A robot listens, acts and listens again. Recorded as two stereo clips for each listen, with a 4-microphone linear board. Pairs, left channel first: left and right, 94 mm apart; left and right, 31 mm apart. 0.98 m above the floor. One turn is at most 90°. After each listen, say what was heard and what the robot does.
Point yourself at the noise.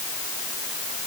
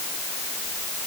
Keep listening.
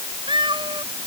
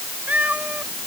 The cat meowing: about 60° right or 120° right. Turn 60° right.
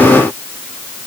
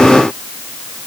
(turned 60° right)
Keep listening.
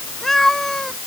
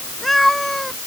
Found it: a cat meowing, straight ahead.